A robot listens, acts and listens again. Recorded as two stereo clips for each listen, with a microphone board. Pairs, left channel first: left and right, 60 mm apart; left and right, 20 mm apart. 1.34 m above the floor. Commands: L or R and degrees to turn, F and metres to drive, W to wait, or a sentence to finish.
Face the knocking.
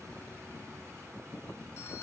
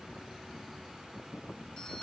W
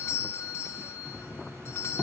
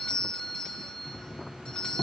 L30
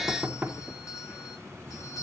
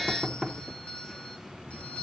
R25
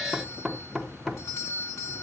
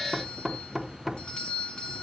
Facing the knocking, 1 to 2 m away.